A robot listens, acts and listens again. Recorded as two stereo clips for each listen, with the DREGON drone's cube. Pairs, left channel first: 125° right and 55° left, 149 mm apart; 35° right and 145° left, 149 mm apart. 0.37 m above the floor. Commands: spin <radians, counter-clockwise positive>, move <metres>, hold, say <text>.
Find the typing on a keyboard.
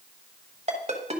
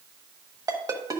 hold
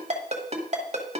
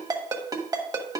hold
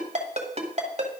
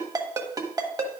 say I can't make out typing on a keyboard to turn to.